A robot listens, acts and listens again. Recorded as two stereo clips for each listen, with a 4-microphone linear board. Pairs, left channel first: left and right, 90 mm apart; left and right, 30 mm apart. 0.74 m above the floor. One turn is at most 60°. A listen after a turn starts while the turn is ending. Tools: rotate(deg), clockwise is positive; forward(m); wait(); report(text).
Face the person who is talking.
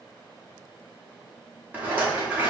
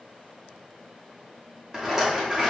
wait()
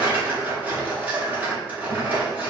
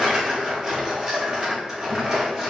wait()
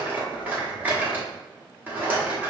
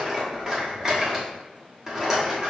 report("I can't make out anyone speaking, only a rattle.")